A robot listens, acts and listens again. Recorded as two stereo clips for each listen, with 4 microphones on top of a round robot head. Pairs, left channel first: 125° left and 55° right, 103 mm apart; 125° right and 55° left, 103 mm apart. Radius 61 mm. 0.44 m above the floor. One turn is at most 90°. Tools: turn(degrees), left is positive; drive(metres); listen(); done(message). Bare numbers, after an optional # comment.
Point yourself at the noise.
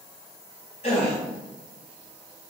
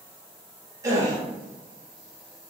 # The gasp: 110° left.
turn(90)
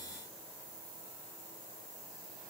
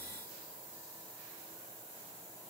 # Nothing new. It was at 20° left.
turn(20)
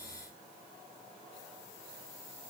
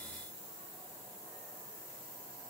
done("I heard a gasp from this way, but can't make it out now.")